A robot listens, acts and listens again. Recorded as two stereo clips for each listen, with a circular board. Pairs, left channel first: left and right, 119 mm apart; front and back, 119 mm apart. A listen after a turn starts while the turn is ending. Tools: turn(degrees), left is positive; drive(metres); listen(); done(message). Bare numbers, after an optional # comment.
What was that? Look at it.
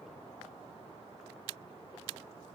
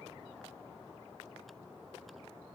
listen()
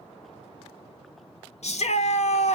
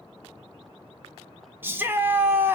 # The shout: 110° left.
turn(110)
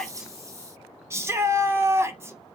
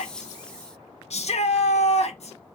# The shout is now 25° right.
turn(-25)
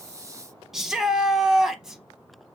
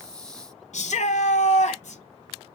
done("Found it: a shout, straight ahead, under 1 m away.")